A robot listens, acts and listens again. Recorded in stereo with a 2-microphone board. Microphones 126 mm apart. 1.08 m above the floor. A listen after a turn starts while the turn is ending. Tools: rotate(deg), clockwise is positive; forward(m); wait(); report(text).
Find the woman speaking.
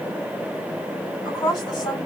rotate(-30)
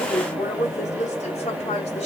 rotate(-120)
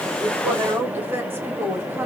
rotate(20)
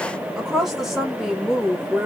report("Found it: a woman speaking, straight ahead.")